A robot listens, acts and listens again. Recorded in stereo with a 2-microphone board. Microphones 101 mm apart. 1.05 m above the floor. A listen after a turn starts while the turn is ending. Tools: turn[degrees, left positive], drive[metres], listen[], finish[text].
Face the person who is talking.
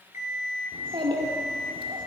Thought: The child speaking: about 60° right or 120° right.
Action: turn[-60]
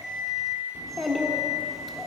Action: finish[Facing the child speaking.]